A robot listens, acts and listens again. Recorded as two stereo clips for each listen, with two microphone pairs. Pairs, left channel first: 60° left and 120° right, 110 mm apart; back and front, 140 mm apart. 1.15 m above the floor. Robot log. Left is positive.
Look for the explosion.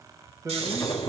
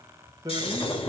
note: The explosion: 120° left.
cmd yaw +120
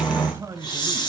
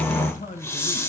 end: I heard an explosion from this way, but can't make it out now.